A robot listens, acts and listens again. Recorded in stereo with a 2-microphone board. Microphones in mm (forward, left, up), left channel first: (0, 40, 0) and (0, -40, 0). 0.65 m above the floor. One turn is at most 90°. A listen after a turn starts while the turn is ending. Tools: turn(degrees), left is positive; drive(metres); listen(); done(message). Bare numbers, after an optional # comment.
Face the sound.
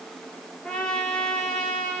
turn(30)
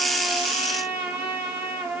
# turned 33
# So it is at 25° right.
turn(-25)
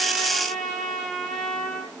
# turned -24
done("Facing the trumpet, over 4 m away.")